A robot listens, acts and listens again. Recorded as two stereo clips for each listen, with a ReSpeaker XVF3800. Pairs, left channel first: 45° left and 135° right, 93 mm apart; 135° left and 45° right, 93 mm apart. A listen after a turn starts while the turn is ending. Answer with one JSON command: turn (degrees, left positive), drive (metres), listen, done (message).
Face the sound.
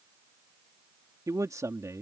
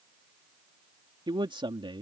{"turn": -75}
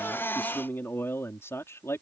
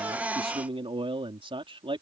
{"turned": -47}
{"turn": -20}
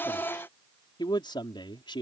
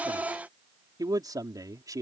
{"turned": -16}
{"done": "Facing the man speaking."}